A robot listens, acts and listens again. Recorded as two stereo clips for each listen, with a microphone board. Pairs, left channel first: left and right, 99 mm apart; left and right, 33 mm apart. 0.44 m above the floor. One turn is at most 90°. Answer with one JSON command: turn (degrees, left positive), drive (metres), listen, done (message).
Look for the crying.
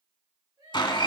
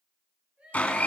{"turn": -50}
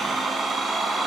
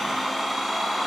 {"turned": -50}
{"listen": true}
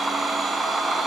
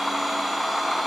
{"listen": true}
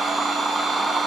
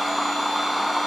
{"done": "I heard crying, but can't make it out now. It was about straight ahead or 80° right."}